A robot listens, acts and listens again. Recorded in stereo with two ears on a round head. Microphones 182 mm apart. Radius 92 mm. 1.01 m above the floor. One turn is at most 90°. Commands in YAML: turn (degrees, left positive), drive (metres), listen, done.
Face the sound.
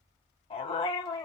turn: 20
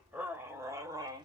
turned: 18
turn: -20
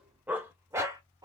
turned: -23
turn: -20
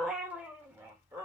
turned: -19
turn: -15
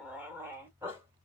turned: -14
turn: -10
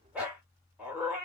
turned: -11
done: "Facing the dog barking."